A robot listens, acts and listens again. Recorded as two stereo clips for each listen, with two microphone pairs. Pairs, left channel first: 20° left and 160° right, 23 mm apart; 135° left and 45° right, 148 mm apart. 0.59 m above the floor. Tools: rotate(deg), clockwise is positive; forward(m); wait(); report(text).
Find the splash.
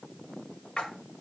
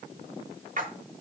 rotate(20)
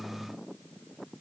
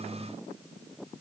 report("Facing where the splash came from. I can't hear it now.")